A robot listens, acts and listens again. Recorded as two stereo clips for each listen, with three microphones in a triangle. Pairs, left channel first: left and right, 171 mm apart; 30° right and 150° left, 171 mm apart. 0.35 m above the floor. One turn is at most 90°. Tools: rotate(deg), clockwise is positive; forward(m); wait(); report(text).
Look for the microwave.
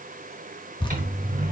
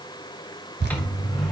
rotate(90)
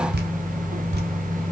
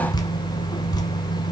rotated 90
report("Found it: a microwave, straight ahead, 1 to 2 m away.")